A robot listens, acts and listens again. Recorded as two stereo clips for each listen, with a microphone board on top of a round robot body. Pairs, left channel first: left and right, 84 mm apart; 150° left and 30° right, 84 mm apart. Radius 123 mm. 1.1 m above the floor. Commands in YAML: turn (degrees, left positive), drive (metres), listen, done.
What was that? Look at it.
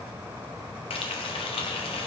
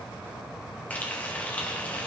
turn: 75
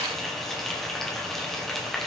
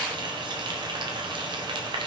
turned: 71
done: "Found it: frying, straight ahead, 1 to 2 m away."